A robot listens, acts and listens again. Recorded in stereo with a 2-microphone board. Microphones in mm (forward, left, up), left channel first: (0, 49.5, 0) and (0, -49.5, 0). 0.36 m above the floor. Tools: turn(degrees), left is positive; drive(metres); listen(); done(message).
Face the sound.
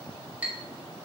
turn(degrees=-30)
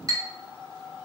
turn(degrees=-135)
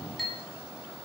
done("Facing the clink.")